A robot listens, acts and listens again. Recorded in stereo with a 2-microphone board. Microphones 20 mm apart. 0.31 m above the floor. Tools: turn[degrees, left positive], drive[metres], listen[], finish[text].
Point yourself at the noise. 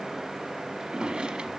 Thought: The drawer: about 60° right or 120° right.
Action: turn[-60]
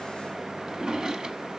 Thought: So it is at 45° right.
Action: turn[-45]
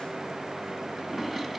Thought: The drawer is now 20° right.
Action: turn[-20]
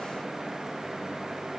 Action: listen[]
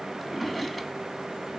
Action: finish[Facing the drawer.]